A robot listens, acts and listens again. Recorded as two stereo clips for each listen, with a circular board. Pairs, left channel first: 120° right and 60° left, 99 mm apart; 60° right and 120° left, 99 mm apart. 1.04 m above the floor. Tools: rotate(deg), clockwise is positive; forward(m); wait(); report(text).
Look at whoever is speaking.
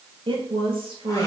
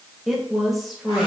rotate(-30)
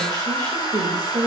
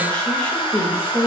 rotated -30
rotate(-15)
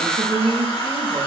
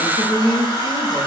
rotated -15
report("Facing the woman speaking, 1 to 2 m away.")